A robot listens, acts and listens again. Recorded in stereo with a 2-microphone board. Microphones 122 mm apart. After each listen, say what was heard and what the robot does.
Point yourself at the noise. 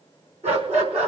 The dog barking: about 65° right or 115° right. Turn 65° right.
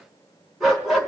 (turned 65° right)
Facing the dog barking, over 4 m away.